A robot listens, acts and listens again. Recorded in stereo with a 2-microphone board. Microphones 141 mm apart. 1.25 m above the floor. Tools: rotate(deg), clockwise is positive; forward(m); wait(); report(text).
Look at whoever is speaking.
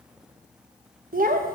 rotate(90)
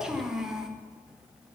report("Facing the child speaking.")